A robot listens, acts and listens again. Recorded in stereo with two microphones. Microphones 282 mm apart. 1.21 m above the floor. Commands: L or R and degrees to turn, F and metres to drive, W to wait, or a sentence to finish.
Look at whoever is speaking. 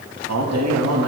R75
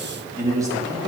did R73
R15
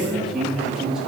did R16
Facing the man speaking.